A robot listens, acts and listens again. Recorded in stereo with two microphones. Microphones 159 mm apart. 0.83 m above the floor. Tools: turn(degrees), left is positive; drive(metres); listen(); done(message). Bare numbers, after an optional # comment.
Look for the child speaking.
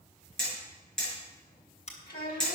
turn(90)
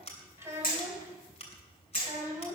# So it is at 20° right.
turn(-20)
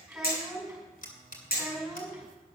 done("Facing the child speaking, over 4 m away.")